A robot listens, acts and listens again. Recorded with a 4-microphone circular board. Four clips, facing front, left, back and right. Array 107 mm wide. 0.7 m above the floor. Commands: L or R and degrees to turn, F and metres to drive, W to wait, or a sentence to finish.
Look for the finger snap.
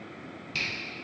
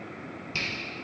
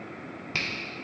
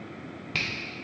R150
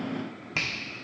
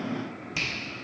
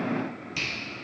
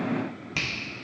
R15
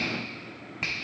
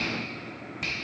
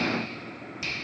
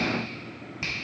Found it: a finger snap, straight ahead, 1 to 2 m away.